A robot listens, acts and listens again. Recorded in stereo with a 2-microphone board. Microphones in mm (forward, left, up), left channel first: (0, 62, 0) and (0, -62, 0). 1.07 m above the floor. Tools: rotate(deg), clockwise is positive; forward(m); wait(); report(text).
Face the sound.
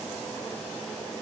wait()
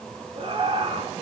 rotate(50)
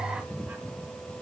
wait()
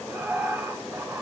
rotate(20)
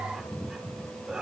report("Found it: laughter, straight ahead, 2 to 4 m away.")